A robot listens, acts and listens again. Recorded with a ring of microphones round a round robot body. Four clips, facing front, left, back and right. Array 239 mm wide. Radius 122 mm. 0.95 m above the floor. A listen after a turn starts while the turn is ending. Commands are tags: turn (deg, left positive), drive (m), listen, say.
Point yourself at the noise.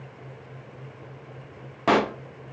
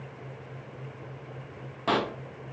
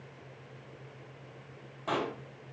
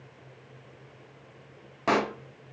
<turn deg="-10"/>
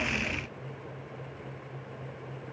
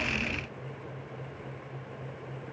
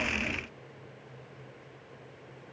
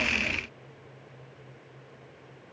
<say>I heard a pop from this way, but can't make it out now.</say>